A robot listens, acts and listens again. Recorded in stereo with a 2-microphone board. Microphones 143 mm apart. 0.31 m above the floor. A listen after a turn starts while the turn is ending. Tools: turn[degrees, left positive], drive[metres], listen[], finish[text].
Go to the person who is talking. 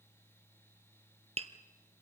Action: listen[]
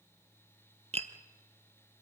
Action: listen[]
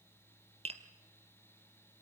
Action: finish[I can't make out anyone speaking to turn to.]